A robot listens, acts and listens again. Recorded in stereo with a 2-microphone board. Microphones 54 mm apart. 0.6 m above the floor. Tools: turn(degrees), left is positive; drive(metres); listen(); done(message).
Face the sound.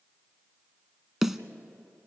turn(degrees=-30)
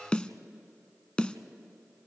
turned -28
turn(degrees=25)
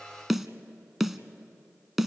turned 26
done("Found it: a snare drum, straight ahead.")